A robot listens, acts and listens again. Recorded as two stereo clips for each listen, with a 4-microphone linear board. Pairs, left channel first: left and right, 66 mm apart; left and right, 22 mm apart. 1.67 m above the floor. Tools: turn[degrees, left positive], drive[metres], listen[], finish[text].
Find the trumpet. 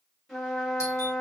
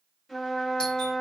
Action: turn[30]
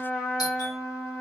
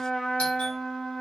Thought: So it is at 145° left.
Action: turn[145]
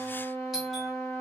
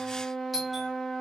Thought: The trumpet is now 30° left.
Action: turn[30]
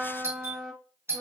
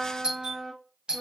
Action: finish[Found it: a trumpet, straight ahead, 2 to 4 m away.]